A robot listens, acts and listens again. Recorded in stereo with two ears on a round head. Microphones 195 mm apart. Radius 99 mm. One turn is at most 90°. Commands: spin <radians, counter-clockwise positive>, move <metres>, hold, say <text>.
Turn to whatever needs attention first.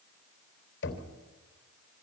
hold
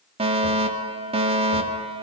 spin -0.44
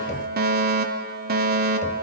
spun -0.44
spin -1.57
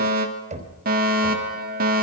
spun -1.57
spin -0.87
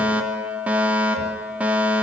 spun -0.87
say Facing the fire alarm, 2 to 4 m away.